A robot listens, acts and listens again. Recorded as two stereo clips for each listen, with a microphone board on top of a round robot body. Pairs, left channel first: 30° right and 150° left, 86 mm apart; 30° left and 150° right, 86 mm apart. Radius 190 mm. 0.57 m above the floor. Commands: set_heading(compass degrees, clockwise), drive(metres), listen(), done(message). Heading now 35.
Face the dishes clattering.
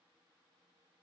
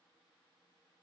listen()
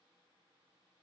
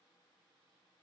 listen()
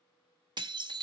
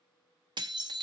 set_heading(215)
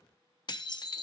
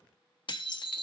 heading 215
done("Facing the dishes clattering, 1 to 2 m away.")